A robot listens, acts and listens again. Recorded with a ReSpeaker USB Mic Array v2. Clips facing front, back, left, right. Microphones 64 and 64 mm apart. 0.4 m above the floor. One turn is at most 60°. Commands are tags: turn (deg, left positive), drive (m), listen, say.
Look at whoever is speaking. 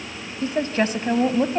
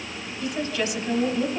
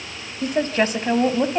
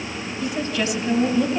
<turn deg="40"/>
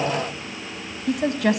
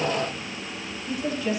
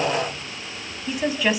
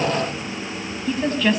<say>Found it: a woman speaking, straight ahead, 2 to 4 m away.</say>